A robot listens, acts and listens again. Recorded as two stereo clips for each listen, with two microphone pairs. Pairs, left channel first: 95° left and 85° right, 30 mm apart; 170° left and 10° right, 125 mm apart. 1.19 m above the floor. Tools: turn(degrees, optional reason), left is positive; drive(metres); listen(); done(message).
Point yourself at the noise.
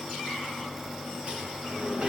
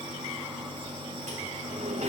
turn(degrees=-30, reason="The sliding door: 30° right.")
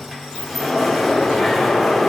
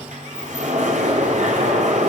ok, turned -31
done("Found it: a sliding door, straight ahead, over 4 m away.")